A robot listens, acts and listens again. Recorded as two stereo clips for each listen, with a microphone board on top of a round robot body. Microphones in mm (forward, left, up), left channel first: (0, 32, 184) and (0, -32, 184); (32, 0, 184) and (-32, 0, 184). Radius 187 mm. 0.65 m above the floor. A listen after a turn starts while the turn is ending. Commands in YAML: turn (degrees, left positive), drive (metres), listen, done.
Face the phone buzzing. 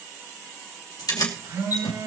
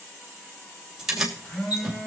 turn: -70
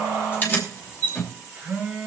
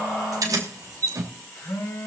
turn: -20
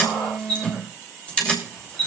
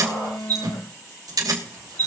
done: "Facing the phone buzzing."